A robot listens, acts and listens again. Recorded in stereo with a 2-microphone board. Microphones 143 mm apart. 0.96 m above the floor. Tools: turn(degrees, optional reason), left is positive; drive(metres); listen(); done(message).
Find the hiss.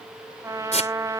turn(degrees=55, reason="The hiss: about 55° left or 125° left.")
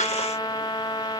listen()
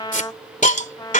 turn(degrees=70, reason="So it is at 70° left.")
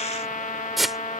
done("Facing the hiss.")